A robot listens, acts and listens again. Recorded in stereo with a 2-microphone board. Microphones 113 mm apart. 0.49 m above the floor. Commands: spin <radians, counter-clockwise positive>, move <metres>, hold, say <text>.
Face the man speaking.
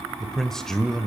spin 0.52
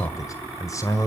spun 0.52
spin 2.53
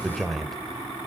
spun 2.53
say Found it: a man speaking, straight ahead, 1 to 2 m away.